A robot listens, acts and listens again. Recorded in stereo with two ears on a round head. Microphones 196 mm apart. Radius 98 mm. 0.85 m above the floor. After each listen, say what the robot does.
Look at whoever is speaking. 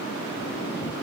Keep listening.
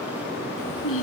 Turn 65° left.
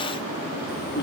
Turn 50° left.
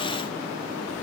Keep listening.
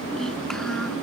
Keep listening.
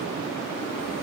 I heard a child speaking from this way, but can't make it out now.